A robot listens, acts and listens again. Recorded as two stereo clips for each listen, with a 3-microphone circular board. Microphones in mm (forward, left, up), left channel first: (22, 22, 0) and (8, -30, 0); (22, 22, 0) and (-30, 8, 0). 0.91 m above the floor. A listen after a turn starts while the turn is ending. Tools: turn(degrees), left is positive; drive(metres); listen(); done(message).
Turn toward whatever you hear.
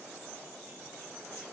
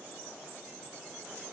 listen()
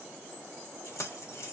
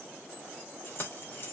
turn(degrees=60)
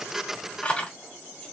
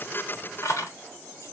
turn(degrees=10)
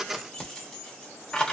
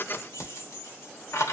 done("Facing the keys jangling.")